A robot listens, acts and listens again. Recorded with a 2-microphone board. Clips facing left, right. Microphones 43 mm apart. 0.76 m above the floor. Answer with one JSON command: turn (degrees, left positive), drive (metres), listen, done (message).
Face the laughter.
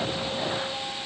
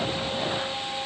{"listen": true}
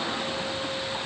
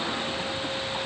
{"listen": true}
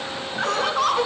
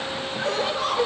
{"turn": 70}
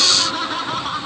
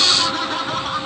{"done": "Found it: laughter, straight ahead."}